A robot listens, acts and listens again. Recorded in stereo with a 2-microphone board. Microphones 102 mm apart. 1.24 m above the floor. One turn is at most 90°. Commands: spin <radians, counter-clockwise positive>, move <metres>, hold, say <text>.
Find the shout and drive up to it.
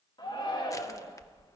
spin 0.87
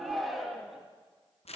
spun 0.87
move 1.0
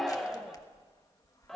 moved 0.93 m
move 1.0
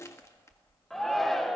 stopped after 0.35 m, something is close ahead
say Arrived at the shout, straight ahead.